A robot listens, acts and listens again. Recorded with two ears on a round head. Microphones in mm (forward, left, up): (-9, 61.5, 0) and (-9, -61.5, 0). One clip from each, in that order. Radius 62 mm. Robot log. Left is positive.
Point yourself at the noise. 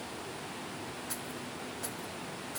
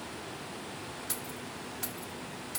note: The keys jangling: about 70° right or 110° right.
cmd yaw -70
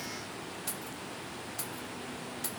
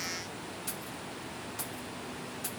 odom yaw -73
note: So it is at 25° left.
cmd yaw +25
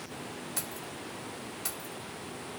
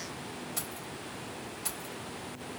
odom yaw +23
note: The keys jangling is now 15° left.
cmd yaw +15
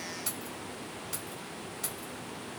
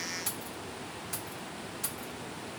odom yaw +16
end: Facing the keys jangling, 1 to 2 m away.